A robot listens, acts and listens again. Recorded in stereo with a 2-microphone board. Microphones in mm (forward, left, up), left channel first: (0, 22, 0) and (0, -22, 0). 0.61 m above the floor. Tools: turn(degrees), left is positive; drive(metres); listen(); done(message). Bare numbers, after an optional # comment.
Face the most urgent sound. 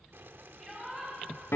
turn(-30)
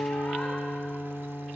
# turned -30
listen()
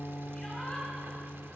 listen()
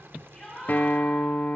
# So it is at 20° left.
turn(20)
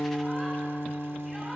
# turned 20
listen()
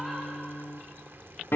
listen()
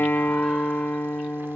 done("I heard a shout from this way, but can't make it out now.")